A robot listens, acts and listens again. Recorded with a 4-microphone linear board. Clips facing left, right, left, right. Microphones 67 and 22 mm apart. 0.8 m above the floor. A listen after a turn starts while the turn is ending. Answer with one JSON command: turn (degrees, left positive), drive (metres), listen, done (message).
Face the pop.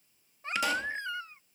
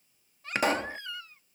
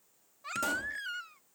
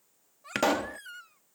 {"turn": -50}
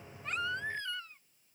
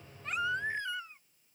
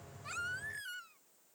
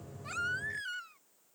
{"listen": true}
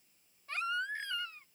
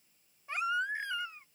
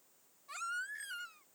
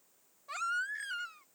{"done": "I heard a pop, but can't make it out now. It was about straight ahead or 80° right."}